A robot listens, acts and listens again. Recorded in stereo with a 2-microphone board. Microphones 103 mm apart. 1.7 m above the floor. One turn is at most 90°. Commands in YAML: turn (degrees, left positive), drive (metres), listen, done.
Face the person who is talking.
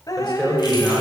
turn: 30
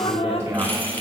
turn: -25
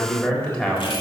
turn: 10
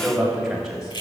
done: "Found it: a man speaking, straight ahead, 2 to 4 m away."